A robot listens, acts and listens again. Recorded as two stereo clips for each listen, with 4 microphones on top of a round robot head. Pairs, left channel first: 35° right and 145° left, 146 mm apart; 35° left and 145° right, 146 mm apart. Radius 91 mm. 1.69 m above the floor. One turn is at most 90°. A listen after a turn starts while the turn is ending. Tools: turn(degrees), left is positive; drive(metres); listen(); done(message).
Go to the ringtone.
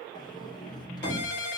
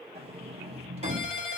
turn(degrees=-15)
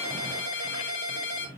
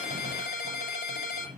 drive(metres=1.0)
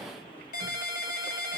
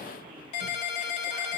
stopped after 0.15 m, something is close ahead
done("Something is in my way. I am facing the ringtone but have not reached it.")